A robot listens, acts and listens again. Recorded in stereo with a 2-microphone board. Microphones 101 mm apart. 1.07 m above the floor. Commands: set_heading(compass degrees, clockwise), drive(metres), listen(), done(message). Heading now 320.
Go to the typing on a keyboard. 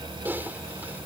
set_heading(340)
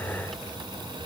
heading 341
listen()
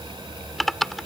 drive(1.0)
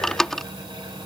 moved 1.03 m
drive(1.0)
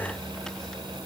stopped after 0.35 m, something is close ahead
listen()
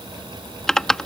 done("Arrived at the typing on a keyboard, straight ahead.")